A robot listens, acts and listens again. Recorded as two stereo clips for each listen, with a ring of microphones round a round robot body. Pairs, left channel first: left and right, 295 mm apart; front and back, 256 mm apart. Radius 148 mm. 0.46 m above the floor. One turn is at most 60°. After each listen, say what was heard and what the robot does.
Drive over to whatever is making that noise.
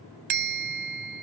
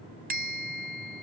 The bell: 120° right. Turn 60° right.
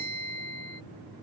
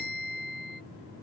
The bell is now 60° right. Turn 60° right.
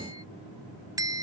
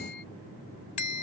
The bell is now 10° right. Turn 10° right.
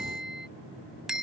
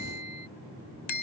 Drive 1.0 m forward.
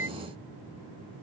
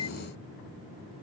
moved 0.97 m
Keep listening.
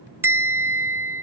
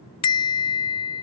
The bell is now 10° right. Turn 10° right.
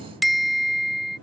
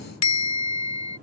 Drive 1.0 m forward.
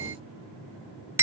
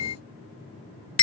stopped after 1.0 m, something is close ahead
The bell is now 10° right. Turn 10° right.
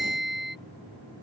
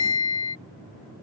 I am next to the bell.